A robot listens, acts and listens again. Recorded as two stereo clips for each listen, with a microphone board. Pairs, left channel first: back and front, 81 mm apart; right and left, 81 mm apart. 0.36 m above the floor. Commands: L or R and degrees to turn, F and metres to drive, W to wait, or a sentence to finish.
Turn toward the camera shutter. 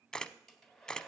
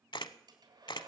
R100
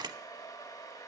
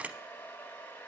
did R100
L15
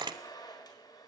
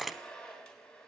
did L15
Found it: a camera shutter, straight ahead, under 1 m away.